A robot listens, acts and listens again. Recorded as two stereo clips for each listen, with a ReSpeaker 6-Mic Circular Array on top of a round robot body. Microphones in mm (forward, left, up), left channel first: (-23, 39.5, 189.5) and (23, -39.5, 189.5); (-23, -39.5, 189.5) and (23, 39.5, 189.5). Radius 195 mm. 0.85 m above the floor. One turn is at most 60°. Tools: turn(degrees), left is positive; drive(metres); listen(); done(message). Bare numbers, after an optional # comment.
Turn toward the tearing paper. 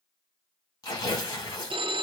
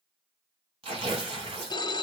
# The tearing paper: 70° left.
turn(60)
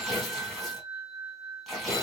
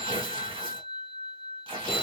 # The tearing paper is now 35° left.
turn(35)
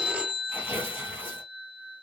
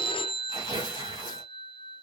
# The tearing paper is now 15° left.
turn(15)
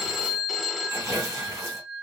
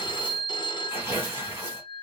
done("Found it: tearing paper, straight ahead, 1 to 2 m away.")